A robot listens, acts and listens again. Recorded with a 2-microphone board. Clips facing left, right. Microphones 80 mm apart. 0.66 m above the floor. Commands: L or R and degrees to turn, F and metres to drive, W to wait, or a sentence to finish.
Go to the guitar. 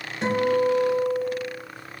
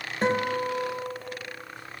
R40
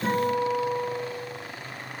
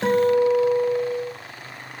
R100
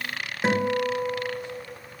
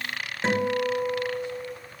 L10
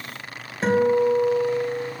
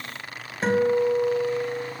F1.0
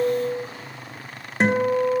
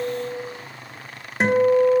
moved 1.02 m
F1.0
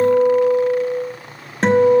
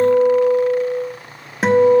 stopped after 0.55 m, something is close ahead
Arrived at the guitar, straight ahead.